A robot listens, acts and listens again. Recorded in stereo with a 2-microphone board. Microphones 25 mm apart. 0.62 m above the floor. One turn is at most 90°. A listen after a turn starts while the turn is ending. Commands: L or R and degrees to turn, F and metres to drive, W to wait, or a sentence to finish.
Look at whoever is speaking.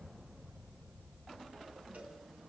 W
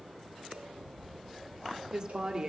R35
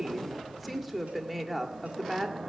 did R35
Found it: a woman speaking, straight ahead.